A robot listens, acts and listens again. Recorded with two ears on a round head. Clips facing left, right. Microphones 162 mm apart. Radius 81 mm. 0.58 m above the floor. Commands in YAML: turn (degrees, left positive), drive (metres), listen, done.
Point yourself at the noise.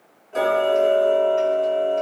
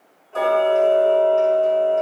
turn: 20
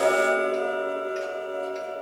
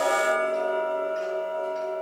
turn: 140
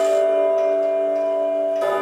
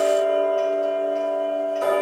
turn: 10
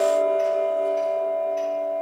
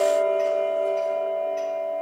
done: "Facing the ticking."